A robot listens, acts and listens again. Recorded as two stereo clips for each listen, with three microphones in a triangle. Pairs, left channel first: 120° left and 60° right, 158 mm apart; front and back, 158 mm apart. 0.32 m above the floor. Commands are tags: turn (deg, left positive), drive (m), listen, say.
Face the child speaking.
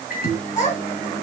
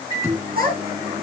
<turn deg="160"/>
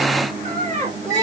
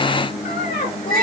<turn deg="-20"/>
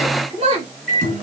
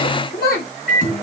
<turn deg="-10"/>
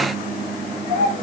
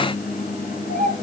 <turn deg="-10"/>
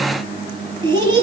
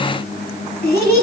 <say>Facing the child speaking, over 4 m away.</say>